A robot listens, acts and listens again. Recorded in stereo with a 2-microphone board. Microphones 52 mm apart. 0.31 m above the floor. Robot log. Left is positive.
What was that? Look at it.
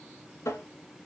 note: The tapping: about 65° left or 115° left.
cmd yaw +65
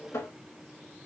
note: So it is at 50° left.
cmd yaw +50
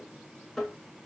end: Facing the tapping.